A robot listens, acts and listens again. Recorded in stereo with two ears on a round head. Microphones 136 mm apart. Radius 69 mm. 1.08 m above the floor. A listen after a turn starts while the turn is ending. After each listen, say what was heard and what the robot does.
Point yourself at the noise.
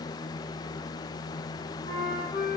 The flute: about 30° left or 150° left. Turn 30° left.
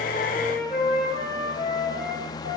Facing the flute.